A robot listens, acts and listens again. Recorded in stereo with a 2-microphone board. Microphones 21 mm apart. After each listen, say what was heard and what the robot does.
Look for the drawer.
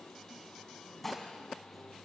Keep listening.
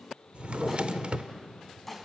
The drawer: about 55° right or 125° right. Turn 55° right.
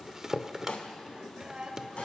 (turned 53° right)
So it is at 25° right. Turn 25° right.
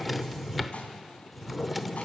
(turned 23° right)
Found it: a drawer, straight ahead, under 1 m away.